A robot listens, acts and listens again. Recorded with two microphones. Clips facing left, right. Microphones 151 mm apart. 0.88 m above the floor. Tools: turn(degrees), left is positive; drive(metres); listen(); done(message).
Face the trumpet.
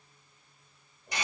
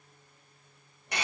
listen()
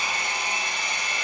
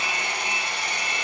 listen()
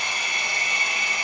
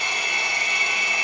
done("I can't make out a trumpet to turn to.")